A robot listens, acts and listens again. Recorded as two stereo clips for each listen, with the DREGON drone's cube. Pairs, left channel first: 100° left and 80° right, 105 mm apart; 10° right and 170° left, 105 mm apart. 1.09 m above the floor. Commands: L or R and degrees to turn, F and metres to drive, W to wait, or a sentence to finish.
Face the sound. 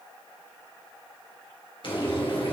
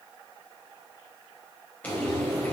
L65
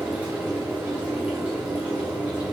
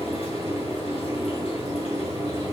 Facing the frying, 2 to 4 m away.